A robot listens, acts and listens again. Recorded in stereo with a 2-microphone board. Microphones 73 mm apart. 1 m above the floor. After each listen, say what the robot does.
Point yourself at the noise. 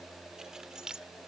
Turn 30° right.
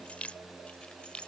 Turn 15° left.
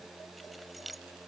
Found it: keys jangling, straight ahead.